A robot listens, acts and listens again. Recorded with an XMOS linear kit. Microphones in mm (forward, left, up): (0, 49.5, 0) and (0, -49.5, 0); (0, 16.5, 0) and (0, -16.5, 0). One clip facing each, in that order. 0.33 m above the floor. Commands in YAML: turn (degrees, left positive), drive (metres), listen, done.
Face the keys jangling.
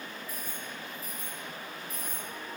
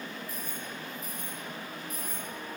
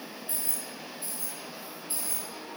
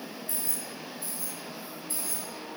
turn: 30
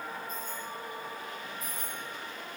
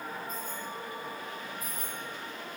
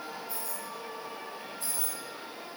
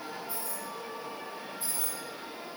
turn: -10
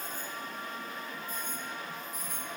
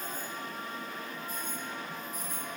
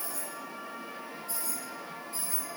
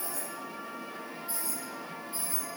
turn: -15
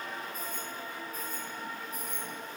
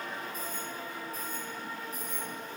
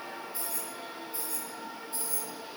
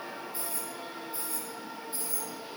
done: "Facing the keys jangling, over 4 m away."